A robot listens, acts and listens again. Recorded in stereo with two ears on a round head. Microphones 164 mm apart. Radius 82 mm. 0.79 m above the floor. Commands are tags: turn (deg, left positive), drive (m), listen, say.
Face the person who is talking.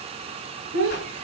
<turn deg="-90"/>
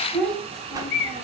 <say>Facing the child speaking.</say>